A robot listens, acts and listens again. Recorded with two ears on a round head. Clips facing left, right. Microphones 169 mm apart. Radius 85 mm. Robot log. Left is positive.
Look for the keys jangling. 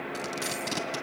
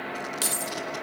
note: The keys jangling: about 50° right or 130° right.
cmd yaw -50
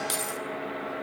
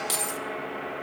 end: Facing the keys jangling, 1 to 2 m away.